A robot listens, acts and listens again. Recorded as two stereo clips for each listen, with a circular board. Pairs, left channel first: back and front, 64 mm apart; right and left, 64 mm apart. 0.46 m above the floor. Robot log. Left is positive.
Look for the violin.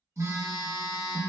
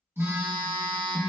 cmd idle
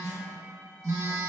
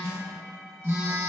cmd idle
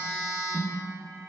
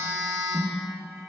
end: I can't make out a violin, only a phone buzzing.